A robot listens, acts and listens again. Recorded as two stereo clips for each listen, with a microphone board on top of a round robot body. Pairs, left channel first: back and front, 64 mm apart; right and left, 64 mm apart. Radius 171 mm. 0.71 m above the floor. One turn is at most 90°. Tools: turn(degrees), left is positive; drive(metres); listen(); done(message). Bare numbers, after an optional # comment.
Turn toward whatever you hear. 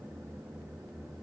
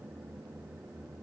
listen()
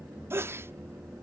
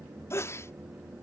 # The sneeze: 45° right.
turn(-45)
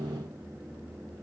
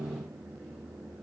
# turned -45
done("I heard a sneeze from this way, but can't make it out now.")